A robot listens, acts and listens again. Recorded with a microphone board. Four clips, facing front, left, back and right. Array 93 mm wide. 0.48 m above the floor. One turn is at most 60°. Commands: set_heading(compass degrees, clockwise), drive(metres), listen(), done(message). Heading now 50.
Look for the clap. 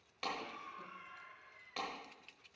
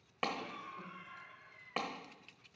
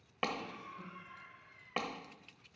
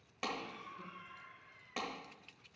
set_heading(350)
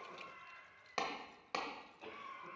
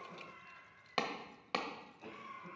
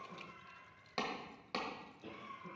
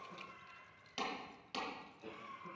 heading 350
set_heading(290)
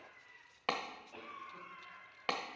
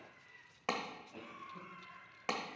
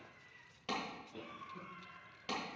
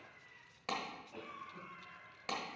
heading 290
set_heading(265)
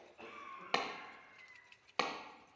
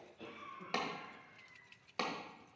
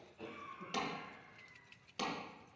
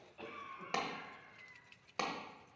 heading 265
set_heading(275)
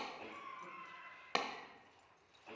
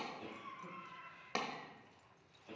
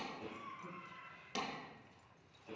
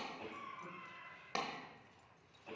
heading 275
done("Found it: a clap, straight ahead.")